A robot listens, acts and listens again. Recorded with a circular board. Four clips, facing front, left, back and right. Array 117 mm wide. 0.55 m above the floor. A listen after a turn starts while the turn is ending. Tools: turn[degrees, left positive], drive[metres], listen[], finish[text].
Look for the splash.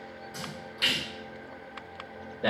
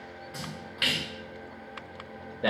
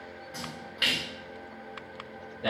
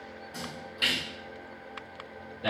Thought: The splash: 115° left.
Action: turn[115]
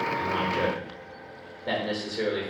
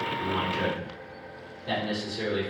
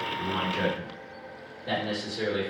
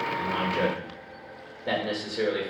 Action: finish[I heard a splash from this way, but can't make it out now.]